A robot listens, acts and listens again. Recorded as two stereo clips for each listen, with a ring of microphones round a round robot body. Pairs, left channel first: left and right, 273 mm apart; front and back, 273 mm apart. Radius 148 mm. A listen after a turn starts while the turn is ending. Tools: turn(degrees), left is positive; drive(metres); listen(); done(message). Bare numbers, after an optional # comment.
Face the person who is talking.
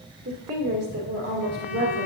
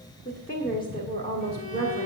# The woman speaking: 60° right.
turn(-60)
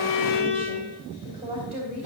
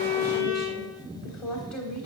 # The woman speaking is now 20° right.
turn(-20)
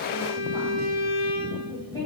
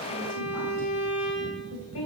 # The woman speaking is now 10° right.
turn(-10)
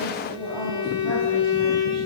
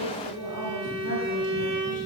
done("Found it: a woman speaking, straight ahead, 2 to 4 m away.")